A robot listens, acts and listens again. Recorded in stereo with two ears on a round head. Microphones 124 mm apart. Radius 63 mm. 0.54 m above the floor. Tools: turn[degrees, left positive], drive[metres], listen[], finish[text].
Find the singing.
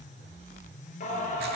Thought: The singing: about 60° left or 120° left.
Action: turn[60]
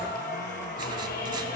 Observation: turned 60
Thought: So it is at 65° left.
Action: turn[65]
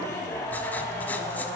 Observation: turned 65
Thought: The singing is now 20° left.
Action: turn[20]
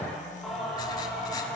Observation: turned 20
Action: finish[Found it: singing, straight ahead, over 4 m away.]